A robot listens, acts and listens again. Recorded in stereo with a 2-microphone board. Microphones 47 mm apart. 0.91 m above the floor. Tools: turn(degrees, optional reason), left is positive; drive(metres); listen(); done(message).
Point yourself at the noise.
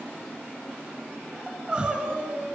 turn(degrees=-25, reason="The crying: about 25° right or 155° right.")
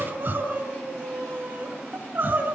turn(degrees=-130, reason="So it is at 130° right.")
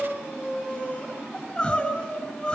turn(degrees=30, reason="The crying is now 30° left.")
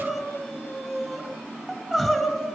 turn(degrees=10, reason="The crying is now 10° left.")
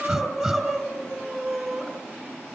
done("Facing the crying.")